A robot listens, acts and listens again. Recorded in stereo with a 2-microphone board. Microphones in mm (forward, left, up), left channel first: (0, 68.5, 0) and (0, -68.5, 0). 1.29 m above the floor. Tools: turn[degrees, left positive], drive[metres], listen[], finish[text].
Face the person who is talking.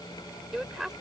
Action: turn[-30]
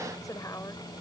Thought: So it is at 25° left.
Action: turn[25]
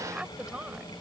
Action: finish[Found it: a woman speaking, straight ahead.]